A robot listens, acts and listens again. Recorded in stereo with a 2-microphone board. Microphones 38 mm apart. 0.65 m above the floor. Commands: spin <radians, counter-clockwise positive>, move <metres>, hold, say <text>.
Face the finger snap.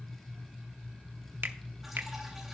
spin -1.13
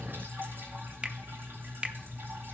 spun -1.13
spin -0.52
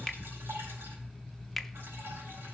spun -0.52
say Found it: a finger snap, straight ahead, under 1 m away.